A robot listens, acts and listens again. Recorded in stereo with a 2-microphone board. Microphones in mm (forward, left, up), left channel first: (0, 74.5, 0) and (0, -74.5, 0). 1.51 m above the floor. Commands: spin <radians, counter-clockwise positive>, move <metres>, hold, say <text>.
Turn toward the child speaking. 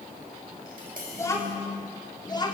spin 0.52
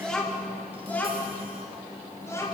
spin 0.35
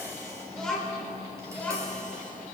spin 0.17
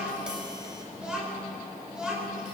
say Facing the child speaking, over 4 m away.